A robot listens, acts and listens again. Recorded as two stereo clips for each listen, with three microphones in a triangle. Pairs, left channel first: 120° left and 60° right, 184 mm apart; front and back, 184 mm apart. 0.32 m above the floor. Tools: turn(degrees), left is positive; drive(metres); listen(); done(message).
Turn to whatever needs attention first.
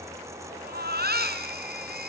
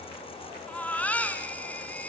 turn(degrees=-80)
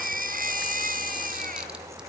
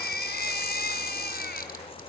turn(degrees=-25)
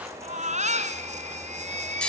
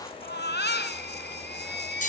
turn(degrees=-10)
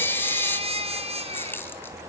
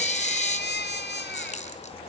done("Facing the baby crying, 2 to 4 m away.")